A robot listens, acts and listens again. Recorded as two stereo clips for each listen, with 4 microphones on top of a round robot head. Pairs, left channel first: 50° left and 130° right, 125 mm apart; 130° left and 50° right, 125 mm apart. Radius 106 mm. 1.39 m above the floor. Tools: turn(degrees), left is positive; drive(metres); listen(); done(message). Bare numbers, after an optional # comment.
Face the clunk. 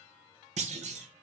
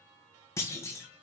# The clunk: 160° right.
turn(-160)
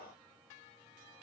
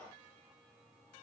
done("I heard a clunk from this way, but can't make it out now.")